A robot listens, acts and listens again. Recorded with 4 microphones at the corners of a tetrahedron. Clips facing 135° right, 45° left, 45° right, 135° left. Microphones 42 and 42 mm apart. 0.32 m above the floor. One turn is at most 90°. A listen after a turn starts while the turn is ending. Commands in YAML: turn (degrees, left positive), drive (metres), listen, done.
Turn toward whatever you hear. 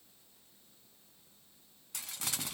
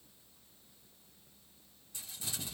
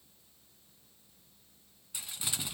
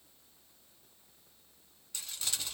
turn: -90
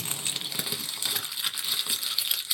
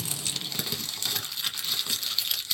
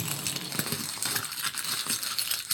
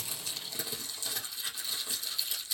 turn: -50
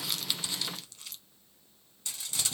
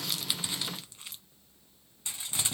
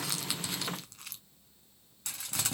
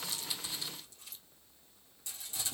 turn: -20
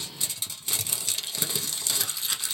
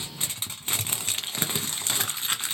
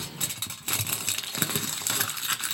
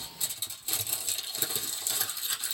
done: "Found it: crumpling, straight ahead, under 1 m away."